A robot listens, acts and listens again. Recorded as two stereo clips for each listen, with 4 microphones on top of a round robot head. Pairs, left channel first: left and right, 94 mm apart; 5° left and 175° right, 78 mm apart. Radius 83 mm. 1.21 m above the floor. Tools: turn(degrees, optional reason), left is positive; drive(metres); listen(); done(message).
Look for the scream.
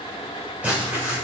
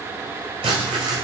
listen()
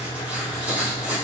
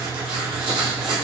listen()
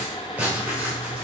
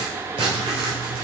done("I can't make out a scream, only writing.")